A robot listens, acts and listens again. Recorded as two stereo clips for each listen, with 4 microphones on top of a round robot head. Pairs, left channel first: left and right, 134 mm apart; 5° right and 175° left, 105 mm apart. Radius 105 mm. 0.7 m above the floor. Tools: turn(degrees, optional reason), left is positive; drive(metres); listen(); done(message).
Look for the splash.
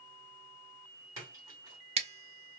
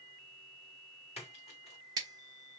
turn(degrees=-25, reason="The splash: 25° right.")
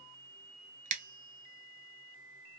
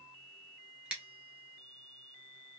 done("I heard a splash from this way, but can't make it out now.")